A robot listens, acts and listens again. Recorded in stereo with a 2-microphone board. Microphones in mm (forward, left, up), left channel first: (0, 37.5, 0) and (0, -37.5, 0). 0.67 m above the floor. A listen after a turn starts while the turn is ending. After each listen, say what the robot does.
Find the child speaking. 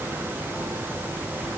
Keep listening.
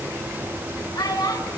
Turn 70° left.
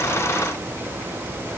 Keep listening.
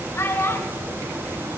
Turn 40° left.
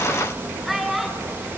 Facing the child speaking, over 4 m away.